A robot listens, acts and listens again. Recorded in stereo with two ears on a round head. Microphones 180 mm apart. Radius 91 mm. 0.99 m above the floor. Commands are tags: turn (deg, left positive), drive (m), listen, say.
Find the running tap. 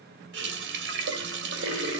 <turn deg="-65"/>
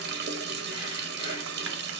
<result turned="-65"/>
<turn deg="-55"/>
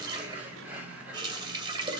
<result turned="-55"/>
<turn deg="-20"/>
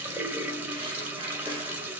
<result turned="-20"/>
<turn deg="-10"/>
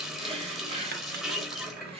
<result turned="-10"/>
<say>Found it: a running tap, straight ahead.</say>